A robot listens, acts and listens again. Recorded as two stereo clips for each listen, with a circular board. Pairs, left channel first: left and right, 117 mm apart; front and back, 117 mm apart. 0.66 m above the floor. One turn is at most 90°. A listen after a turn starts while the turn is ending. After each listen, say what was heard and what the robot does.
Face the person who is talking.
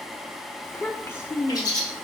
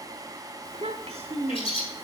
The child speaking: 160° left. Turn 90° left.
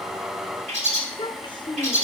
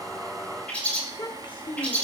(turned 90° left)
The child speaking is now 45° left. Turn 45° left.
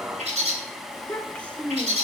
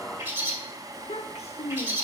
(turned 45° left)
The child speaking is now 15° left. Turn 15° left.
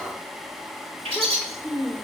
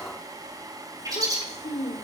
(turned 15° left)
Found it: a child speaking, straight ahead, 1 to 2 m away.